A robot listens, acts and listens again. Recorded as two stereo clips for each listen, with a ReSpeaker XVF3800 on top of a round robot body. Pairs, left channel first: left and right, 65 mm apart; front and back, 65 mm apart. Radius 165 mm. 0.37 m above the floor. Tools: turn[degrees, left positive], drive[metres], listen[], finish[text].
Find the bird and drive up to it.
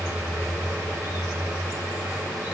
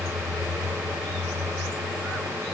Action: listen[]
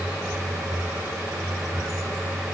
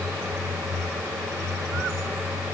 Action: listen[]
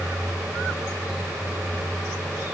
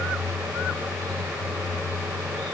Action: finish[I can't make out a bird to turn to.]